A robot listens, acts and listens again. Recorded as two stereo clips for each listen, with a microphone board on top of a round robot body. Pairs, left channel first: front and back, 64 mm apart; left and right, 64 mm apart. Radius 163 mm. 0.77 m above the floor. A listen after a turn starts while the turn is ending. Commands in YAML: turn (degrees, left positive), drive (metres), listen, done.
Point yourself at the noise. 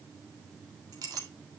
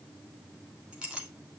turn: -165
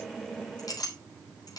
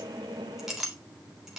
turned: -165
done: "Facing the clink, 2 to 4 m away."